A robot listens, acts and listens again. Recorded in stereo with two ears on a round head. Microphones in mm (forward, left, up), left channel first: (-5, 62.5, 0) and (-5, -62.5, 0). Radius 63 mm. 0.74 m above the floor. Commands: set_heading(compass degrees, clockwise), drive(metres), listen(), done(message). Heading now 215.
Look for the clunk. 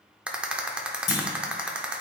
set_heading(165)
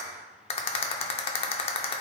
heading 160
listen()
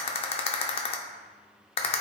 done("I heard a clunk, but can't make it out now. It was about 5° right or 75° left.")